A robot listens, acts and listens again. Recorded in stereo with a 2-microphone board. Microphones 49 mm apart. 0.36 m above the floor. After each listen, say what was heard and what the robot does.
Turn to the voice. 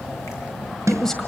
Turn 30° left.
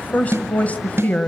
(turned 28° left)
So it is at 140° left. Turn 140° left.
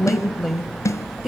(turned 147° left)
Found it: a woman speaking, straight ahead, 1 to 2 m away.